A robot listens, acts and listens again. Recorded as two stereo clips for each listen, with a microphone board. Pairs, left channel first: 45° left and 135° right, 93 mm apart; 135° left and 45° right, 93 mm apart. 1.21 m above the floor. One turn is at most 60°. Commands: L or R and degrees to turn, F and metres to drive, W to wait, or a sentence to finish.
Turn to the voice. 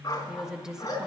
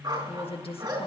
L60
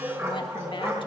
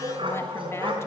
L60
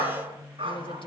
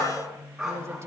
L15
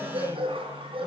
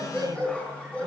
W
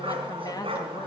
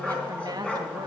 Facing the woman speaking.